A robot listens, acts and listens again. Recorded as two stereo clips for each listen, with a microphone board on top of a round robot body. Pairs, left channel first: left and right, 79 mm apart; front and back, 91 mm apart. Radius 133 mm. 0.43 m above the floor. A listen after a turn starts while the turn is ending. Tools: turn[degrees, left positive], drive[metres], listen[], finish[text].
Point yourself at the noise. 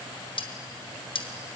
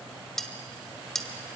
Thought: The cutlery clinking: 85° left.
Action: turn[85]
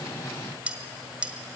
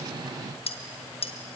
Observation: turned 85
Thought: The cutlery clinking is now 15° right.
Action: turn[-15]
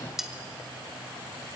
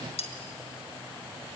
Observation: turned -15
Action: finish[Found it: cutlery clinking, straight ahead, 1 to 2 m away.]